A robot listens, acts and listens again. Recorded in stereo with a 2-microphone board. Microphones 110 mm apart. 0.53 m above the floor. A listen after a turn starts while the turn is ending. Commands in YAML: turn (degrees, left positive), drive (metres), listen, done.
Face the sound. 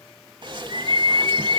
turn: -45
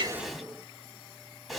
done: "Found it: a bird, straight ahead, under 1 m away."